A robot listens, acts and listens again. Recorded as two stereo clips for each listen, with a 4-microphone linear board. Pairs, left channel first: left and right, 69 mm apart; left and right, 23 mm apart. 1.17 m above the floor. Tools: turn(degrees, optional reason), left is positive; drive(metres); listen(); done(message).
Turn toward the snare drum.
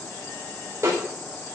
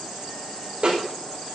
turn(degrees=-45, reason="The snare drum: about 45° right or 135° right.")
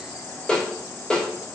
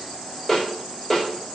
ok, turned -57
turn(degrees=10, reason="So it is at 10° left.")
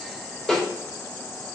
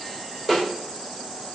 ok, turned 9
done("Facing the snare drum.")